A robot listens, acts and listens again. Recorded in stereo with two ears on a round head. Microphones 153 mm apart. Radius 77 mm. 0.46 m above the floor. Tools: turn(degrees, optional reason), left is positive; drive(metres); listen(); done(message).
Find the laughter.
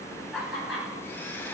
turn(degrees=-30)
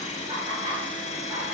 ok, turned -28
turn(degrees=-145, reason="So it is at 145° right.")
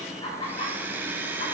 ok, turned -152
turn(degrees=30, reason="The laughter is now 30° left.")
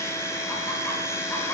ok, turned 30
listen()
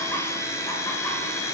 listen()
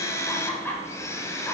turn(degrees=10, reason="The laughter is now 10° left.")
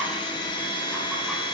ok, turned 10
listen()
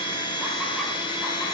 listen()
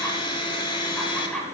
done("Found it: laughter, straight ahead, 2 to 4 m away.")